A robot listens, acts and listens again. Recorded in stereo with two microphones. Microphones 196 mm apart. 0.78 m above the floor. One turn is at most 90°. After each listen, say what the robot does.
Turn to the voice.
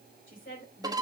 Turn 90° left.
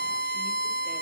Keep listening.
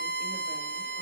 Keep listening.
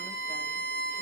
I heard a woman speaking from this way, but can't make it out now.